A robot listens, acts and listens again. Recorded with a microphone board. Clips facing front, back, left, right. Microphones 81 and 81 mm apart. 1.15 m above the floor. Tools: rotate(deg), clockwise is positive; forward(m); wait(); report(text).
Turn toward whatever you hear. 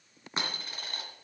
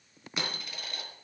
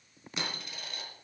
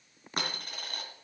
rotate(50)
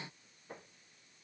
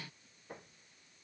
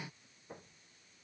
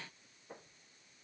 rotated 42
rotate(10)
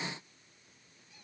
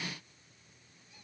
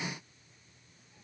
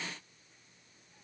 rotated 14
report("I heard a dropped coin from this way, but can't make it out now.")